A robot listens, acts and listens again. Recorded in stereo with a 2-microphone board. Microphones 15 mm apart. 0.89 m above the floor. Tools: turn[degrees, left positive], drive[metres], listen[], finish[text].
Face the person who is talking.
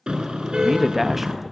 Action: turn[-30]
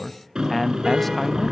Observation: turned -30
Thought: So it is at 10° left.
Action: turn[10]
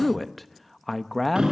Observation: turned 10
Thought: The man speaking is now 10° left.
Action: turn[10]
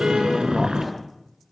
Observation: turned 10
Action: listen[]
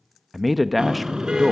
Action: finish[Facing the man speaking, 1 to 2 m away.]